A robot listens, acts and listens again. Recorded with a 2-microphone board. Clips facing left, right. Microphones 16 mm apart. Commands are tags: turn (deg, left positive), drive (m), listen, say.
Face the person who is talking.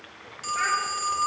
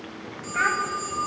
<turn deg="-65"/>
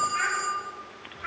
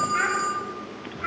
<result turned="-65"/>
<turn deg="-35"/>
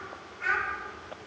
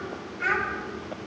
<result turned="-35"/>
<turn deg="-30"/>
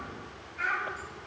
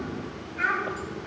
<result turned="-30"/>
<turn deg="-20"/>
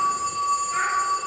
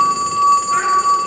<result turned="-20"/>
<listen/>
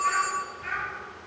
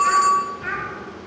<turn deg="-15"/>
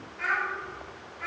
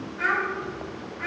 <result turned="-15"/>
<say>Facing the child speaking, 2 to 4 m away.</say>